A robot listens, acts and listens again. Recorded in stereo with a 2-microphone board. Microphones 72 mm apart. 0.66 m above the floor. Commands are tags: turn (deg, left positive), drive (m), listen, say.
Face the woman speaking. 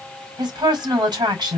<turn deg="-90"/>
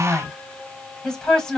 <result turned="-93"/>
<turn deg="10"/>
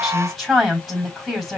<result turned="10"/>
<say>Found it: a woman speaking, straight ahead.</say>